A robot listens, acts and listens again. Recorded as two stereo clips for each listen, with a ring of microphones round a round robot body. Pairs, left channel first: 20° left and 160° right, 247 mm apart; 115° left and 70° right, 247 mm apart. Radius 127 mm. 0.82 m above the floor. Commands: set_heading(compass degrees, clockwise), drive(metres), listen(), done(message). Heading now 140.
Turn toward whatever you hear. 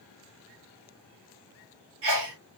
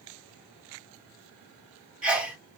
set_heading(295)
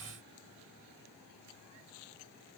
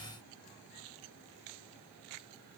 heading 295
done("Facing where the sneeze came from. I can't hear it now.")